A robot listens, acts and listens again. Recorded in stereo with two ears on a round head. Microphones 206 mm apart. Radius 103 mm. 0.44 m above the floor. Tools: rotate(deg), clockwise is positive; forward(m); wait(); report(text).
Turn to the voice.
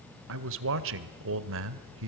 rotate(60)
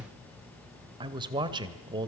rotate(25)
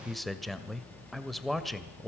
report("Facing the man speaking.")